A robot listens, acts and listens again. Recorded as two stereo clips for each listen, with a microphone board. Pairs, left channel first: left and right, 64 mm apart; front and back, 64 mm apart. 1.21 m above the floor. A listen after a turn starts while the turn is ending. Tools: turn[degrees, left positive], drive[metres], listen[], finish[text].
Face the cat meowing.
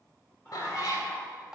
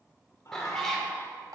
Thought: The cat meowing: 85° left.
Action: turn[85]
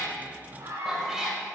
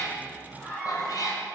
Action: finish[Facing the cat meowing, 2 to 4 m away.]